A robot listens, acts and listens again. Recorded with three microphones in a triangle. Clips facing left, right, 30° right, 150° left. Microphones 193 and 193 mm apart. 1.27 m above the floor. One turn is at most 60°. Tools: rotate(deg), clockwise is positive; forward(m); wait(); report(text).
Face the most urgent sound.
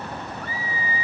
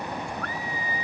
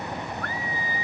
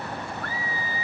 rotate(-10)
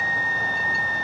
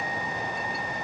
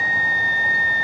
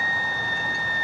report("Facing the scream.")